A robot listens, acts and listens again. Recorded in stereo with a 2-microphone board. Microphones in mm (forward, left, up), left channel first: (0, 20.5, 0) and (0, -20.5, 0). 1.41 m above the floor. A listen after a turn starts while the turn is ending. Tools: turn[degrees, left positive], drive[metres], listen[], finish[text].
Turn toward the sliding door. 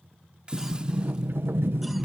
Thought: The sliding door: about 65° right or 115° right.
Action: turn[-65]
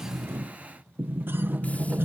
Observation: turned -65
Thought: So it is at 50° right.
Action: turn[-50]
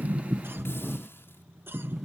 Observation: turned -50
Action: finish[Found it: a sliding door, straight ahead.]